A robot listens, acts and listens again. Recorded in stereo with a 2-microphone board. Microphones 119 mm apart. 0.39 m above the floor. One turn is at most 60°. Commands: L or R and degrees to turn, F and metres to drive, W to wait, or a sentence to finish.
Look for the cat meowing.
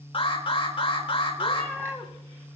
L30
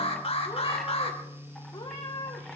L60
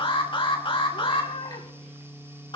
L60
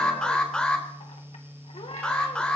L50
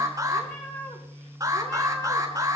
L15
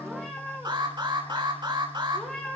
Facing the cat meowing.